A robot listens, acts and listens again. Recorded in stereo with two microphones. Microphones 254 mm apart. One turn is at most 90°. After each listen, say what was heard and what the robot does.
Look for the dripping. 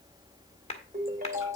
Keep listening.
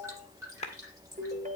Turn 30° right.
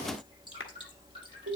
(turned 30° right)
So it is at 20° left. Turn 20° left.
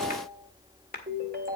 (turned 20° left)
Keep listening.
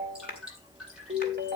Facing the dripping, over 4 m away.